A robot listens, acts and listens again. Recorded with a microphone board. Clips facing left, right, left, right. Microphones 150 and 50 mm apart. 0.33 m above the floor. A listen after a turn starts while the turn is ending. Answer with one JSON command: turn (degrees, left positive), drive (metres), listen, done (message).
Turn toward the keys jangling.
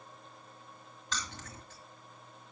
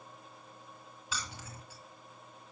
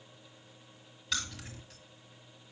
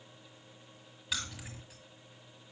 {"turn": -30}
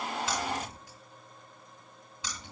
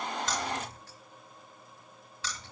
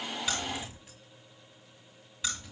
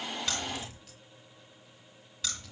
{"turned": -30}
{"turn": 20}
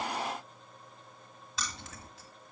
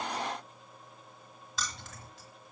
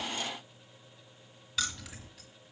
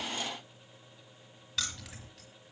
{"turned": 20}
{"done": "Facing the keys jangling, 1 to 2 m away."}